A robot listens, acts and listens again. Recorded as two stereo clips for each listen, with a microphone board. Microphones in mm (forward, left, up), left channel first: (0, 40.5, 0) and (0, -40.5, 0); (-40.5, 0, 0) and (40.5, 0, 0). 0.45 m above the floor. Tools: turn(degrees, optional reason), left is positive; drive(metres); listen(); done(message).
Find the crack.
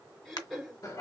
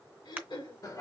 turn(degrees=65, reason="The crack: 65° left.")
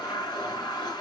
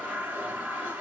done("Facing where the crack came from. I can't hear it now.")